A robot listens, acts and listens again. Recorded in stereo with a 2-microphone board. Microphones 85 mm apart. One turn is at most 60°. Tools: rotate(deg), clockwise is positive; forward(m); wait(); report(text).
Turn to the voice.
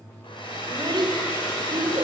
rotate(60)
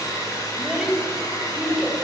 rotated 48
report("Found it: a child speaking, straight ahead, 2 to 4 m away.")